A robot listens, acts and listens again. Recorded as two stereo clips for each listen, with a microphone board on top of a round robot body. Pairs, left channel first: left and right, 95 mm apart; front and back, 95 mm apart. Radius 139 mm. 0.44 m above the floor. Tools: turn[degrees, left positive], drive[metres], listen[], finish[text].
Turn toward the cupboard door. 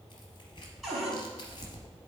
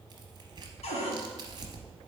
Action: finish[Facing the cupboard door, 2 to 4 m away.]